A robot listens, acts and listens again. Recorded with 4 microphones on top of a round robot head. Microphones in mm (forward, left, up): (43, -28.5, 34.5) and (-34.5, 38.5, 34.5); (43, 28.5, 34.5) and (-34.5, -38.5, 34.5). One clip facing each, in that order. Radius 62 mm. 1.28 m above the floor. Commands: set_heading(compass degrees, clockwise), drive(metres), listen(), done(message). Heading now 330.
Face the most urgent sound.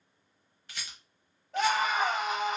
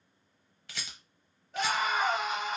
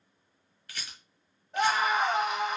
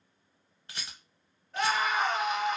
set_heading(0)
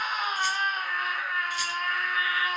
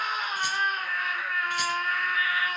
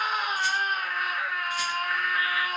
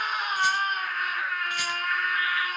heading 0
done("Facing the scream, 1 to 2 m away.")